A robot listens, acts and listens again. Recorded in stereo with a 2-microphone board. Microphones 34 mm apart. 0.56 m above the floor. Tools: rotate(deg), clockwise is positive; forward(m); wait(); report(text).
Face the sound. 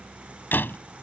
rotate(-75)
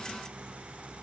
wait()
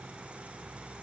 report("I heard a door slam, but can't make it out now. It was about straight ahead or 30° left.")